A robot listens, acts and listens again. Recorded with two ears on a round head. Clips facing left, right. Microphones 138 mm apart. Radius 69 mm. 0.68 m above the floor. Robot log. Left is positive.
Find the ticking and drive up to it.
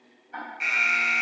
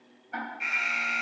note: The ticking: about 65° right or 115° right.
cmd yaw -65
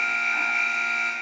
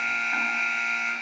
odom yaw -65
cmd idle
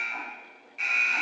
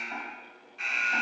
cmd idle
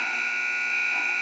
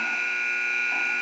end: I heard ticking, but can't make it out now. It was about straight ahead or 50° right. I did not reach it.